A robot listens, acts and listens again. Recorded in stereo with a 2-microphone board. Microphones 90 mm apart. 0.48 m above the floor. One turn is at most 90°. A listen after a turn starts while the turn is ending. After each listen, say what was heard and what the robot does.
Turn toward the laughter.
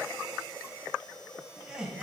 Turn 30° right.
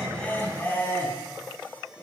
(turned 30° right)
So it is at 25° left. Turn 25° left.
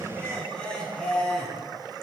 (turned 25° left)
The laughter is now 10° left. Turn 10° left.
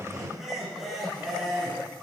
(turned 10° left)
Found it: laughter, straight ahead, over 4 m away.